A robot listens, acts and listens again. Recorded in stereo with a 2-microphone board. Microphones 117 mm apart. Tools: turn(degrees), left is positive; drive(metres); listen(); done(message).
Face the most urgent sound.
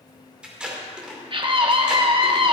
turn(degrees=-45)
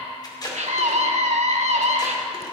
turn(degrees=-85)
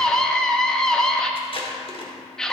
done("Found it: a scream, straight ahead.")